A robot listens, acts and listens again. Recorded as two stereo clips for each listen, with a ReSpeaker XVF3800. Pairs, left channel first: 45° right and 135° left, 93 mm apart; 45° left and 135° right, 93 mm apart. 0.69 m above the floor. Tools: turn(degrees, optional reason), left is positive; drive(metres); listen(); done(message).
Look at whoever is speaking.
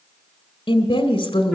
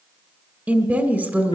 turn(degrees=-65, reason="The woman speaking: 65° right.")
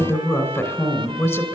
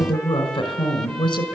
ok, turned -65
turn(degrees=15, reason="The woman speaking is now 15° left.")
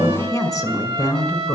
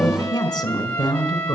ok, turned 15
done("Found it: a woman speaking, straight ahead, 2 to 4 m away.")